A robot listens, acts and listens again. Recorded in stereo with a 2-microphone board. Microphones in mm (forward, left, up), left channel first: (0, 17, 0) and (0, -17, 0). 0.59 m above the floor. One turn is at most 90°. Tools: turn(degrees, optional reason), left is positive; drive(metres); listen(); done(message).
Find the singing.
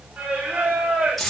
turn(degrees=-65, reason="The singing: about 65° right or 115° right.")
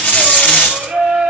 turn(degrees=-45, reason="So it is at 45° right.")
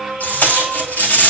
done("Found it: singing, straight ahead, 2 to 4 m away.")